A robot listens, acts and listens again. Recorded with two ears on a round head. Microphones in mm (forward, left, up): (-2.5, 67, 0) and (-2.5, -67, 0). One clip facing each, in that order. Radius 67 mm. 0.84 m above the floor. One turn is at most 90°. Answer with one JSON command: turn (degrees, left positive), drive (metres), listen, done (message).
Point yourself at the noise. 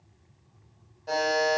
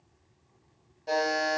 {"turn": -20}
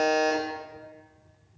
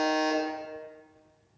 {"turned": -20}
{"done": "Facing the buzzer."}